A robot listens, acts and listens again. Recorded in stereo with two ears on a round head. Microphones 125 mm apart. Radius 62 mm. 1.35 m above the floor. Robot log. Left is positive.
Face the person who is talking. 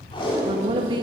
note: The woman speaking: about 35° right or 145° right.
cmd yaw -35
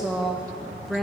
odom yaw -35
end: Found it: a woman speaking, straight ahead, 1 to 2 m away.